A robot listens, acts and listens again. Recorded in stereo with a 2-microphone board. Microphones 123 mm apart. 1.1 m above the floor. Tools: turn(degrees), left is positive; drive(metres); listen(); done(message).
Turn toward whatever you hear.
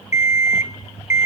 turn(degrees=90)
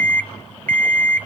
turn(degrees=15)
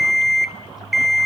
done("Found it: an alarm clock, straight ahead.")